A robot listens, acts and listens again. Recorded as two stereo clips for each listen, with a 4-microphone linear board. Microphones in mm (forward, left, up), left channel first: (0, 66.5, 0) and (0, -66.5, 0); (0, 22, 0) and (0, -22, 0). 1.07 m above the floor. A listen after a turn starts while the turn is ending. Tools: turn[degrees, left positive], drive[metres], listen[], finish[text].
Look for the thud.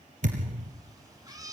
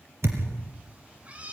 Thought: The thud: about 75° right or 105° right.
Action: turn[-75]
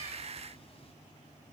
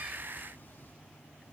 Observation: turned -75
Action: listen[]
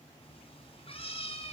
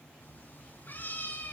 Action: finish[I heard a thud, but can't make it out now. It was about straight ahead or 30° right.]